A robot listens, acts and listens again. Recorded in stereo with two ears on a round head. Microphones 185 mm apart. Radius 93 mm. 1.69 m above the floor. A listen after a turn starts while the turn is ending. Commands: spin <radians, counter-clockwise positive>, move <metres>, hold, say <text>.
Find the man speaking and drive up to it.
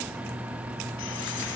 hold
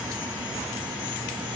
hold
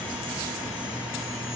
say I can't make out a man speaking.